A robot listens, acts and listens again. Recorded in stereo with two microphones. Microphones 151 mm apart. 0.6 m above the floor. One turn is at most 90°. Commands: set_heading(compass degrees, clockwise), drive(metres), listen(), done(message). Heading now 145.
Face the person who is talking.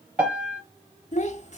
set_heading(95)
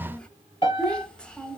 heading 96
done("Facing the child speaking, under 1 m away.")